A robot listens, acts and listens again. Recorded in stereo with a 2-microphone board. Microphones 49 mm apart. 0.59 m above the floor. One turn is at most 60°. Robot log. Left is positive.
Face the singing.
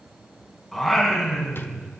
cmd yaw +30
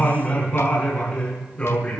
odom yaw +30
note: So it is at 155° left.
cmd yaw +60
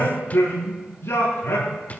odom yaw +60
note: The singing is now 110° left.
cmd yaw +60
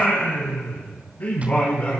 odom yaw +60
note: The singing is now 40° left.
cmd yaw +40
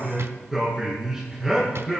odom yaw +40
note: The singing is now 10° right.
cmd yaw -10
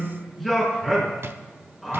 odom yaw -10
end: Found it: singing, straight ahead.